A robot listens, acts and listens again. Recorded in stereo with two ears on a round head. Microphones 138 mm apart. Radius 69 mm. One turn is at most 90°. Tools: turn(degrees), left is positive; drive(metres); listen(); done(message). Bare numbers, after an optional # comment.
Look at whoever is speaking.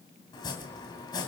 listen()
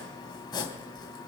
listen()
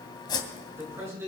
# The man speaking: about 20° right or 160° right.
turn(-20)
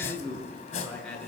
done("Facing the man speaking.")